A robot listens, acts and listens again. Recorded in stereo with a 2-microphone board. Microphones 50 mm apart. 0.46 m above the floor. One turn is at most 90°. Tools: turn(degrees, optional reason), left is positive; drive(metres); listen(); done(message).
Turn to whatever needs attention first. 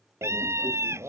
turn(degrees=-70, reason="The scream: about 70° right or 110° right.")
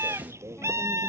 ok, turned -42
turn(degrees=-70, reason="So it is at 70° right.")
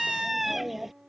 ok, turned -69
done("Facing the scream.")